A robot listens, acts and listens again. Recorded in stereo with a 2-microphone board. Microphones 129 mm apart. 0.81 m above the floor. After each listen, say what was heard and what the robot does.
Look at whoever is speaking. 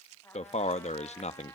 The man speaking: about 60° left or 120° left. Turn 60° left.
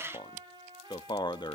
So it is at 40° left. Turn 40° left.
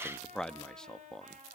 Found it: a man speaking, straight ahead, under 1 m away.